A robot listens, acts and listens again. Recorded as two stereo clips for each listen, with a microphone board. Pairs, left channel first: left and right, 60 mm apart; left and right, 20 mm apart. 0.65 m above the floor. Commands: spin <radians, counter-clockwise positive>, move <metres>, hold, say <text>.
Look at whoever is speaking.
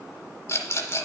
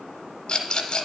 hold
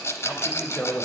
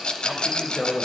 spin 0.35
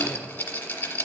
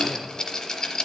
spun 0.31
hold
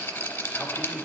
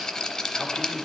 hold
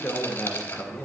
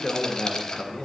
spin 2.53
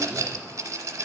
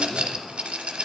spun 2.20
spin 0.35
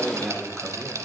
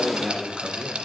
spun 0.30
say Found it: a man speaking, straight ahead, 1 to 2 m away.